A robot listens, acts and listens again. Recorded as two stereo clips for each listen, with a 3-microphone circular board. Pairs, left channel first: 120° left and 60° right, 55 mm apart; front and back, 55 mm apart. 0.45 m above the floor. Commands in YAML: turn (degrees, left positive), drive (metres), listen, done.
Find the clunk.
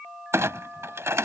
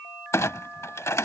turn: -30
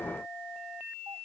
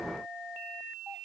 done: "I heard a clunk from this way, but can't make it out now."